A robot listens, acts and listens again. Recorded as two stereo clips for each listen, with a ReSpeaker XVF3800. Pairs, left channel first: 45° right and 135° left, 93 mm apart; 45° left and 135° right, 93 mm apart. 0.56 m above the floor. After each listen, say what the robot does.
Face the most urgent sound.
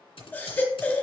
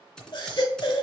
Turn 20° left.
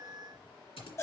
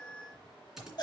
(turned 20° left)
Turn 10° left.
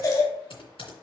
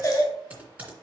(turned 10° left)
Found it: a baby crying, straight ahead, 1 to 2 m away.